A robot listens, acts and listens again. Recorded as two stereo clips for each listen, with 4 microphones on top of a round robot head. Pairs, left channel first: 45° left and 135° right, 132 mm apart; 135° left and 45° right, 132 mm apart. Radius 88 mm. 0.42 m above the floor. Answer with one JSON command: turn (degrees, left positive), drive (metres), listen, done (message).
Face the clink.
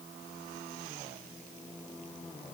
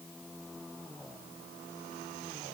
{"listen": true}
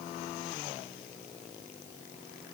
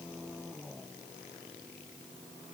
{"listen": true}
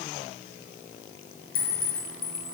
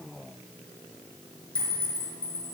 {"turn": 55}
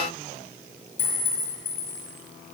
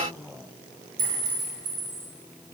{"done": "Facing the clink, over 4 m away."}